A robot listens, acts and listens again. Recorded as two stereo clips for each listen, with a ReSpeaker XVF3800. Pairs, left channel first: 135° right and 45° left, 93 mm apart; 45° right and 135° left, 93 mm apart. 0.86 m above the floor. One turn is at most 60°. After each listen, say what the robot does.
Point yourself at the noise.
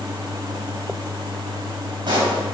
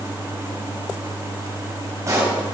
Turn 60° left.
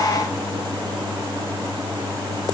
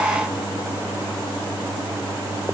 Turn 20° left.
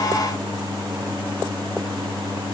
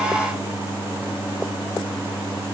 Facing where the pop came from. I can't hear it now.